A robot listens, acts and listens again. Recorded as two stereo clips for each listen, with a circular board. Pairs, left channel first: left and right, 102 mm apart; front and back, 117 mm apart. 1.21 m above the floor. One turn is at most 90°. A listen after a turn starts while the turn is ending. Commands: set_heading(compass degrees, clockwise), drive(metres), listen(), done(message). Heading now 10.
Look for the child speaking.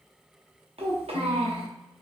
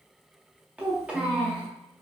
set_heading(100)
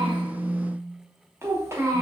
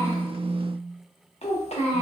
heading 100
set_heading(125)
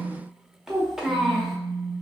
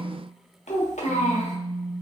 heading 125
done("Found it: a child speaking, straight ahead, under 1 m away.")